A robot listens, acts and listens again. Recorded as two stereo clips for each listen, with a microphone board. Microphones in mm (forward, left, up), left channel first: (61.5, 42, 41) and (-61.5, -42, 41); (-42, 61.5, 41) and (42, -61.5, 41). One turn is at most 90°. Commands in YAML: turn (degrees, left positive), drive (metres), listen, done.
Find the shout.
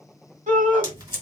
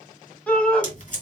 turn: -90
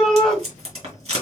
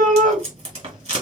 turn: -55
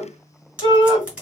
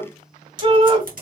turn: -15
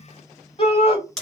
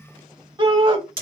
done: "Facing the shout."